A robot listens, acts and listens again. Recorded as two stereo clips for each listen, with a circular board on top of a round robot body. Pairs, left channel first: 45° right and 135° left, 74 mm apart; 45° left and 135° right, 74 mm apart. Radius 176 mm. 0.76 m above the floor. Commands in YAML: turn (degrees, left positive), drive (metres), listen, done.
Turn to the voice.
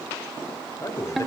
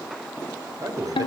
turn: -95
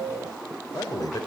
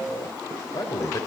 done: "Facing the man speaking, 2 to 4 m away."